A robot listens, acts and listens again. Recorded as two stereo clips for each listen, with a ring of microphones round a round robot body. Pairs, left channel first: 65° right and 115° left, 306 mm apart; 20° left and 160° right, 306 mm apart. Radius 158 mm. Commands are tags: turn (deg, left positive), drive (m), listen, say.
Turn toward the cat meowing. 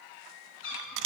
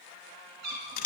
<turn deg="-120"/>
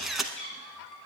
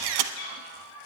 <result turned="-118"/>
<turn deg="-15"/>
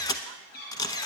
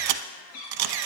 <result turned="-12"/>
<say>Facing the cat meowing, over 4 m away.</say>